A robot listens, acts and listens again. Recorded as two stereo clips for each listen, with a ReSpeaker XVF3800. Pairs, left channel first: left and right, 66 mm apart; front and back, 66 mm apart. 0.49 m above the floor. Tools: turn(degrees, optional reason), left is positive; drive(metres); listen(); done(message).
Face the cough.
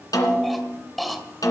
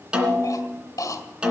done("Found it: a cough, straight ahead, 2 to 4 m away.")